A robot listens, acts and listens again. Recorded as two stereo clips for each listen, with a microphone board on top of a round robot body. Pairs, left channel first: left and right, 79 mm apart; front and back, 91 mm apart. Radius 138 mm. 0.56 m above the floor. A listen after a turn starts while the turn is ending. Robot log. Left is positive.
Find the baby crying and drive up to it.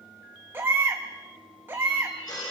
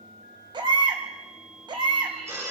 note: The baby crying: 150° right.
cmd yaw -150
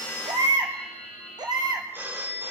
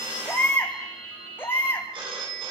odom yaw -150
note: The baby crying is now 65° right.
cmd yaw -65
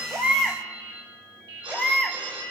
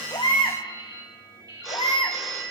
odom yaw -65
cmd fwd 1.0
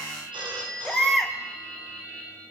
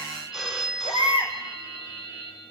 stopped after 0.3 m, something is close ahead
end: Blocked. The baby crying is further on, straight ahead.